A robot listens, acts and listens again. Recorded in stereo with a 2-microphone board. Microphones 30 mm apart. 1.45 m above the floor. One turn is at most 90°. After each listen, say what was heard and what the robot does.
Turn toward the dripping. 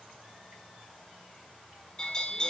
Keep listening.
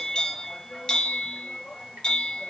Keep listening.
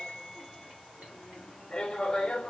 I can't make out dripping to turn to.